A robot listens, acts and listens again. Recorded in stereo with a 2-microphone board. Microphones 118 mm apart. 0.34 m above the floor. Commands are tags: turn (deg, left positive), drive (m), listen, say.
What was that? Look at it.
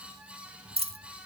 <turn deg="-55"/>
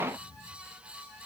<listen/>
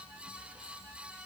<say>I heard a dropped coin, but can't make it out now. It was about straight ahead or 70° right.</say>